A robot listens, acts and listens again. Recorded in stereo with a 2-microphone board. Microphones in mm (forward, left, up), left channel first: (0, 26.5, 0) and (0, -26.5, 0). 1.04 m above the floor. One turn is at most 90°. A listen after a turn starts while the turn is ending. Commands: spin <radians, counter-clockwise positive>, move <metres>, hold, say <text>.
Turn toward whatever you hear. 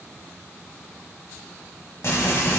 spin 1.05
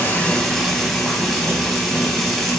say Facing the frying, 1 to 2 m away.